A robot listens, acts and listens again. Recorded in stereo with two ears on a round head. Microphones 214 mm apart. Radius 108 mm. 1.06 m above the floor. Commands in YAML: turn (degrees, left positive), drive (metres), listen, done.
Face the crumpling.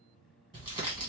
turn: -20
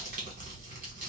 turn: -135
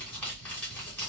turn: 10
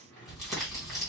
done: "Found it: crumpling, straight ahead, 1 to 2 m away."